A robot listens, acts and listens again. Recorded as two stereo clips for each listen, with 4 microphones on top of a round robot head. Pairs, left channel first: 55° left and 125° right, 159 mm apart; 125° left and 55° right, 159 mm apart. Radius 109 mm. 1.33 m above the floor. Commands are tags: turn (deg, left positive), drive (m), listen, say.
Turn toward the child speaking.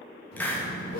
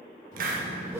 <turn deg="90"/>
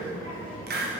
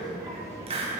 <turn deg="20"/>
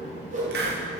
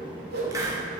<turn deg="10"/>
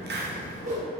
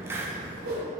<say>Found it: a child speaking, straight ahead.</say>